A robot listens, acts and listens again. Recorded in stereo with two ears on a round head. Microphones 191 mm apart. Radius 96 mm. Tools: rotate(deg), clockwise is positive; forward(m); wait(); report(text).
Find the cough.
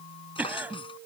rotate(30)
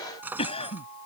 rotate(-25)
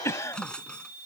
rotate(-10)
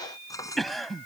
report("Facing the cough.")